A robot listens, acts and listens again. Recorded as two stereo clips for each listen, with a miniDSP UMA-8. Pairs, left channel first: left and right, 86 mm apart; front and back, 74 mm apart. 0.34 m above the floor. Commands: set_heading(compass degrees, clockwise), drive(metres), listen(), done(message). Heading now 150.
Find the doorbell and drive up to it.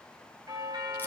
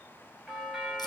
set_heading(245)
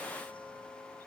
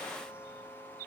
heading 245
set_heading(255)
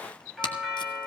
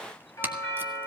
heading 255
drive(1.0)
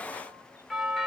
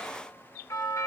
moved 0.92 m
drive(1.0)
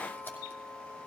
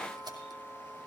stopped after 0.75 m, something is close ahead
done("Arrived at the doorbell, straight ahead.")